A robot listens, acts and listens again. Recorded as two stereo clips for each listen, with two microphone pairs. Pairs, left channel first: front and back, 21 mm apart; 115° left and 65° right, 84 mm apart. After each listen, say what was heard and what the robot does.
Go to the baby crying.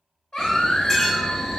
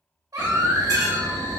The baby crying: 35° right. Turn 35° right.
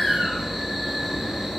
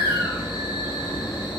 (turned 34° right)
Drive 1.0 m forward.
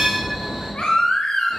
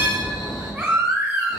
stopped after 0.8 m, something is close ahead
I am next to the baby crying.